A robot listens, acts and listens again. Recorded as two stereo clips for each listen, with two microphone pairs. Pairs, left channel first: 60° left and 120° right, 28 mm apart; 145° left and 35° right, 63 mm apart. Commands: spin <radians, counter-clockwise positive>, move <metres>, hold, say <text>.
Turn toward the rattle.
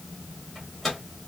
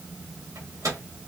hold
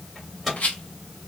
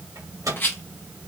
spin 1.57
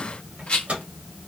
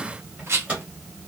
spin 0.26
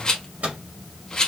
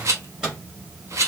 say Found it: a rattle, straight ahead.